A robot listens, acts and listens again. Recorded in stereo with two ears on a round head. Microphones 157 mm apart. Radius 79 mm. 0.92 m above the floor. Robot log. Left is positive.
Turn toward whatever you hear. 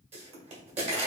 note: The pop: about 40° right or 140° right.
cmd yaw -40
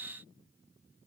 cmd idle
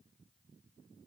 end: I heard a pop, but can't make it out now. It was about straight ahead or 100° right.